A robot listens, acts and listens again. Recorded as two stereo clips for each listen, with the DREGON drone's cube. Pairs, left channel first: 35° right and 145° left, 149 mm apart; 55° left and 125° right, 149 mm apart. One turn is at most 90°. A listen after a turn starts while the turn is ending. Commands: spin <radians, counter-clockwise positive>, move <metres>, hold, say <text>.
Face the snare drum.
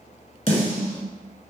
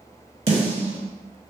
spin -1.40
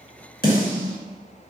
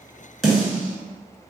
spin -0.52
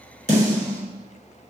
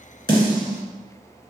spin 0.17
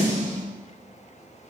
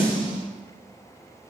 say Facing the snare drum, 1 to 2 m away.